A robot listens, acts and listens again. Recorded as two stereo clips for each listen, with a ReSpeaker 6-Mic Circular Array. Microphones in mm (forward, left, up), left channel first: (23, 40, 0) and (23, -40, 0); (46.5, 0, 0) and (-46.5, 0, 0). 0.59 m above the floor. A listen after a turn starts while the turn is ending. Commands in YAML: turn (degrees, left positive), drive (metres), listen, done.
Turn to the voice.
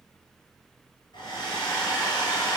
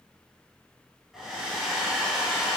listen: true
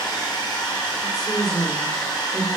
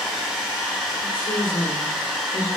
done: "Found it: a woman speaking, straight ahead."